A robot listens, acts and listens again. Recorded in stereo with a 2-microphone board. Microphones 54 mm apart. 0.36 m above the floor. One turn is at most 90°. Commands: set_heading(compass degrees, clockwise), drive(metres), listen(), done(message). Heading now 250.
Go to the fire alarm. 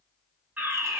set_heading(280)
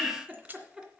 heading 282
drive(1.0)
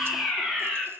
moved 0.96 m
drive(1.0)
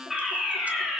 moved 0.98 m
drive(1.0)
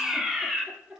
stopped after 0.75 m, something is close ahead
done("Arrived at the fire alarm, straight ahead.")